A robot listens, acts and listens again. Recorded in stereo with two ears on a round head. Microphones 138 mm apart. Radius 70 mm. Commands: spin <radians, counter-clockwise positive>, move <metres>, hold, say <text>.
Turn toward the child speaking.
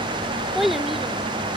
spin 0.52
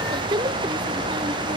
spin -0.52
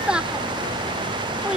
say Facing the child speaking.